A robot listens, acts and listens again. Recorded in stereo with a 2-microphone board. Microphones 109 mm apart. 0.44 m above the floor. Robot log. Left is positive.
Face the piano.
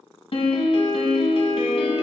note: The piano: about 60° left or 120° left.
cmd yaw +60
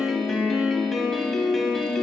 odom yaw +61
end: Facing the piano.